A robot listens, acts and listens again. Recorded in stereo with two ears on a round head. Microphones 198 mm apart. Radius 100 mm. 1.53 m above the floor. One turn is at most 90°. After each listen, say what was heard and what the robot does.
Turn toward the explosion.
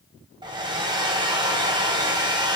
Keep listening.
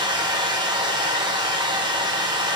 Keep listening.
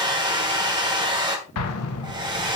Turn 90° left.
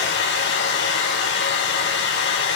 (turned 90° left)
Facing where the explosion came from. I can't hear it now.